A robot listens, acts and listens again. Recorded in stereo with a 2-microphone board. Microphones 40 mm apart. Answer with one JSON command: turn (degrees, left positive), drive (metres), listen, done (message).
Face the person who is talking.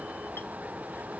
{"listen": true}
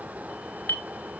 {"listen": true}
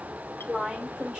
{"turn": -20}
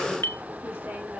{"listen": true}
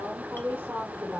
{"turn": -140}
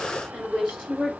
{"turn": -25}
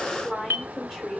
{"done": "Facing the woman speaking, 2 to 4 m away."}